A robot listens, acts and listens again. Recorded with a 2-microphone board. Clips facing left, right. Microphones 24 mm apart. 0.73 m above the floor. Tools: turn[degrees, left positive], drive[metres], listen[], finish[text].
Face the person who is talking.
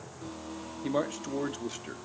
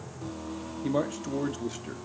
Action: turn[30]
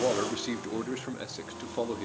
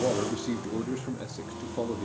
Thought: So it is at 140° left.
Action: turn[140]
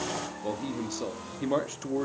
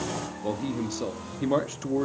Thought: The man speaking is now 10° right.
Action: turn[-10]
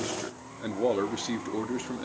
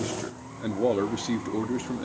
Action: finish[Facing the man speaking, under 1 m away.]